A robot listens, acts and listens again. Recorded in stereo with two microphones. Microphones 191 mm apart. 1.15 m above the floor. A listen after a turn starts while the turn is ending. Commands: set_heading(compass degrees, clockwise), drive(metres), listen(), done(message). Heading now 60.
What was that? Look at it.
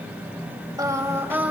set_heading(90)
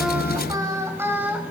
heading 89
set_heading(119)
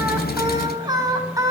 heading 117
set_heading(132)
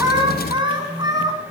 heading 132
set_heading(152)
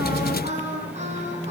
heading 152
set_heading(297)
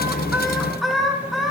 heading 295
done("Facing the singing, 2 to 4 m away.")